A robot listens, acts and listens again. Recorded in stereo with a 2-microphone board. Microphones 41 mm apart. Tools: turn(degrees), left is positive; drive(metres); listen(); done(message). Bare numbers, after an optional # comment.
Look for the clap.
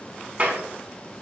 # The clap: about 40° right or 140° right.
turn(-40)
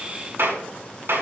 # So it is at 105° right.
turn(-105)
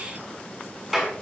done("Found it: a clap, straight ahead.")